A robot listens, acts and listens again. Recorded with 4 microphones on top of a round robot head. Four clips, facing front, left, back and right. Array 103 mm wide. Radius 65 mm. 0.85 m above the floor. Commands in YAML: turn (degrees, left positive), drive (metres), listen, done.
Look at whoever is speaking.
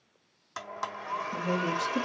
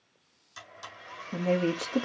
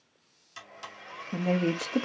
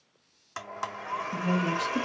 turn: 140
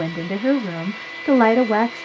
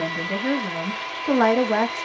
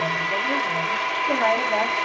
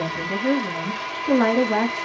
turn: 15
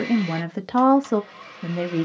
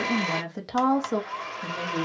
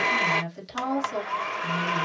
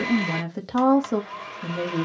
done: "Found it: a woman speaking, straight ahead."